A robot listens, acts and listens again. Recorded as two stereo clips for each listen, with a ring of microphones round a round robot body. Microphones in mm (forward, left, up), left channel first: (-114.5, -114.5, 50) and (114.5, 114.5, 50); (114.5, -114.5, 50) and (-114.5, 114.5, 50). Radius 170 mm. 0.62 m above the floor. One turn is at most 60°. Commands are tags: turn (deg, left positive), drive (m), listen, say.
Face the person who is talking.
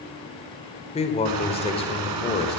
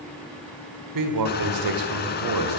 <turn deg="60"/>
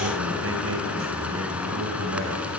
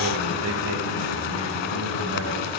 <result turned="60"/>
<turn deg="60"/>
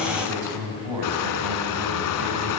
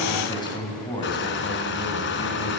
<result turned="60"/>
<turn deg="30"/>
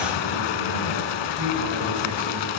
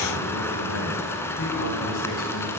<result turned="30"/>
<say>Found it: a man speaking, straight ahead.</say>